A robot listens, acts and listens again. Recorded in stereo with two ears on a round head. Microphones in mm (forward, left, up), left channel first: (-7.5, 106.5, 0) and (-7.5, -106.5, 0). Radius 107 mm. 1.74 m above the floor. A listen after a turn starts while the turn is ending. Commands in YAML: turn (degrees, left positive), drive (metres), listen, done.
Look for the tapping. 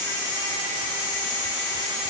listen: true
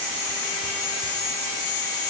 listen: true
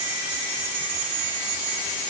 done: "I can't make out tapping to turn to."